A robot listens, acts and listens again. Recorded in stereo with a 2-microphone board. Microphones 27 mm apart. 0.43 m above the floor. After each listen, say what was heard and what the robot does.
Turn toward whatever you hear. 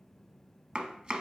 The chopping: about 35° right or 145° right. Turn 35° right.
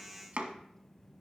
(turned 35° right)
So it is at 110° right. Turn 110° right.
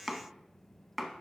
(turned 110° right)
Facing the chopping, under 1 m away.